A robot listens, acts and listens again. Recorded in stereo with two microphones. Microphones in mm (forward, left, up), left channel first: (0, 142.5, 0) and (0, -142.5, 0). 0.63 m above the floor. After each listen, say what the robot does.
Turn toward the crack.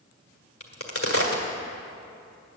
Turn 50° left.
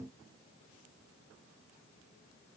Keep listening.
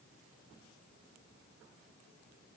I heard a crack, but can't make it out now. It was about straight ahead or 80° left.